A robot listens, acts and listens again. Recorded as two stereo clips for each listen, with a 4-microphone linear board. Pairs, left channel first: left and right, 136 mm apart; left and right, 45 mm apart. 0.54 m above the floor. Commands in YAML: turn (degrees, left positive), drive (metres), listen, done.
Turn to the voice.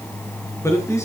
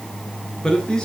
turn: 20
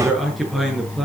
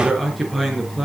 done: "Found it: a man speaking, straight ahead, over 4 m away."